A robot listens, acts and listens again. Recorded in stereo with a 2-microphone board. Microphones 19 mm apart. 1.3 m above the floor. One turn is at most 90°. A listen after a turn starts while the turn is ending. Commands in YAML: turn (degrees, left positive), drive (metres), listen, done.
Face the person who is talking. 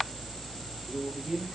turn: -40
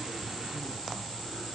listen: true
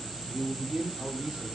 turn: -90
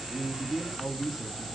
turn: -10
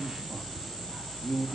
done: "Facing the man speaking, 1 to 2 m away."